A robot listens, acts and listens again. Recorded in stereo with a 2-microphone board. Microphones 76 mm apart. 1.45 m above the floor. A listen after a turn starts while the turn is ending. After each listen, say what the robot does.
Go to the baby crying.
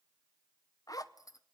Keep listening.
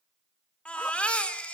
Turn 15° left.
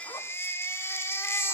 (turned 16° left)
Turn 145° left.
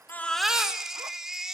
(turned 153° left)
Drive 1.0 m forward.
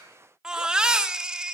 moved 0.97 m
Turn 10° right.
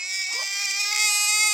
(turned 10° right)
Drive 1.0 m forward.
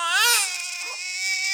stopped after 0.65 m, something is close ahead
I am next to the baby crying.